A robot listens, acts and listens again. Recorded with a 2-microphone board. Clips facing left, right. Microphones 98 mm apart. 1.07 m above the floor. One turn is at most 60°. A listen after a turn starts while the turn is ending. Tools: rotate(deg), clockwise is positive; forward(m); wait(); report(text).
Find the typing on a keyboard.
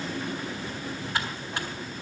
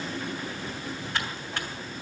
rotate(-30)
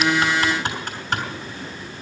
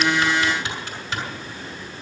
rotate(-60)
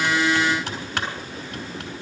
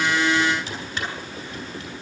rotate(-60)
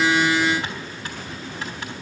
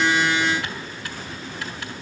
rotate(-30)
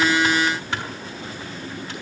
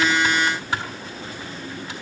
rotate(10)
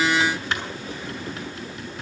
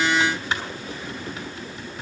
report("Facing the typing on a keyboard, over 4 m away.")